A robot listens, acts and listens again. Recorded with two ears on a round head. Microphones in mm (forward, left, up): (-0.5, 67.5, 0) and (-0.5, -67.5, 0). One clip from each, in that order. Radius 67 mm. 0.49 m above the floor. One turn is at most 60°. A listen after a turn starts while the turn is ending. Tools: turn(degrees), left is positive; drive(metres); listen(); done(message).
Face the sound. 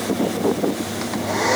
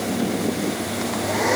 turn(degrees=15)
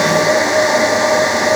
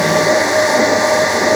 done("Found it: a hair dryer, straight ahead.")